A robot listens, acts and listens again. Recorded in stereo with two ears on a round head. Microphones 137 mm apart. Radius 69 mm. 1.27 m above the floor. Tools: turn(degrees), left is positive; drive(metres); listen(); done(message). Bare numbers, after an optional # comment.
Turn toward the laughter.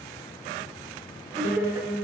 listen()
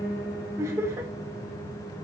# The laughter: about 20° right or 160° right.
turn(-20)
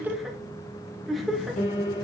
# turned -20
done("Facing the laughter, 2 to 4 m away.")